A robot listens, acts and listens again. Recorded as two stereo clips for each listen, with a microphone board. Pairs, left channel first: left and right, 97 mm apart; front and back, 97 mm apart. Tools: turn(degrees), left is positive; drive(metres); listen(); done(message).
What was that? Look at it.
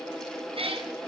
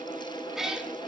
turn(degrees=-95)
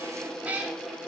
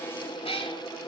turn(degrees=-15)
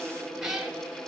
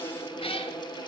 turn(degrees=-10)
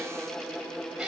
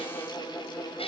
turn(degrees=-10)
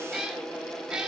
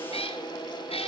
done("Found it: a cat meowing, straight ahead, 2 to 4 m away.")